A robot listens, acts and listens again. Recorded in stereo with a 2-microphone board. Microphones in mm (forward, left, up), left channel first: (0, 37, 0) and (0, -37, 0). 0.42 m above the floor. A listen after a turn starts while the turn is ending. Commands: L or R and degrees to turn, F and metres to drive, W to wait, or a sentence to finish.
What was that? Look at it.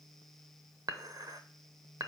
R60
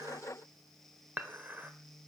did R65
R30
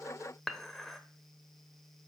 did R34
Found it: dishes clattering, straight ahead, under 1 m away.